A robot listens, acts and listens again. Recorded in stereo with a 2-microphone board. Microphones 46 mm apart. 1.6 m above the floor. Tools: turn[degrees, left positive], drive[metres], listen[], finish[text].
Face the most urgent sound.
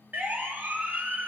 Thought: The siren: about 40° right or 140° right.
Action: turn[-40]
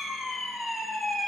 Action: finish[Facing the siren, 2 to 4 m away.]